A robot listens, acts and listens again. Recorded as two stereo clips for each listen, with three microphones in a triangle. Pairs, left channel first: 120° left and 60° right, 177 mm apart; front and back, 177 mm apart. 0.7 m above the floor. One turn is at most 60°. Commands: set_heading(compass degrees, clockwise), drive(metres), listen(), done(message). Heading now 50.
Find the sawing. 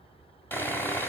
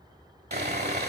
set_heading(110)
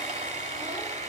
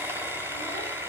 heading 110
set_heading(170)
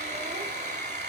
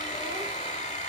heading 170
set_heading(220)
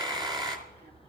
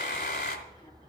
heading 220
done("Found it: sawing, straight ahead, 1 to 2 m away.")